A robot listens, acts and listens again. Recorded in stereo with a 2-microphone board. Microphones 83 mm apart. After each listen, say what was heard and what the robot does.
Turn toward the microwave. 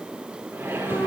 The microwave: about 25° right or 155° right. Turn 25° right.
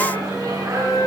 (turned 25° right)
So it is at 125° right. Turn 125° right.
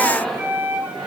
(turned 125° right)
The microwave is now 10° left. Turn 10° left.
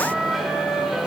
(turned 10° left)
Facing the microwave.